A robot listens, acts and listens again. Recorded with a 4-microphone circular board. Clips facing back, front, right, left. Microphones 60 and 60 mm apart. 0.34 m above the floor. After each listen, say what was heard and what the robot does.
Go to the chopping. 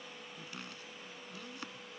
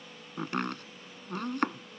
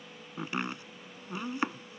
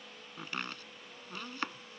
The chopping: 20° right. Turn 20° right.
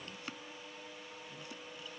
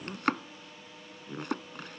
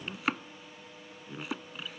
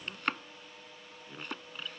Drive 1.0 m forward.
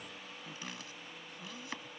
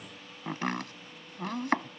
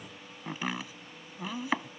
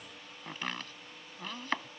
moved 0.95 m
The chopping is now 10° right. Turn 10° right.
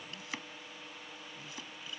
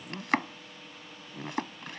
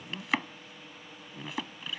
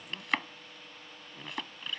Drive 1.0 m forward.
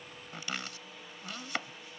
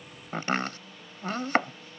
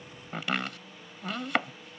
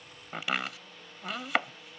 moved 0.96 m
Drive 1.0 m forward.
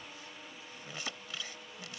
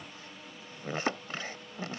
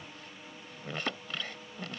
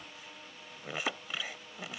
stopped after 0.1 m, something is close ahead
The chopping is now 15° left. Turn 15° left.
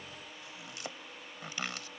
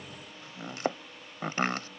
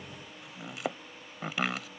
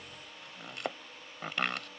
I am next to the chopping.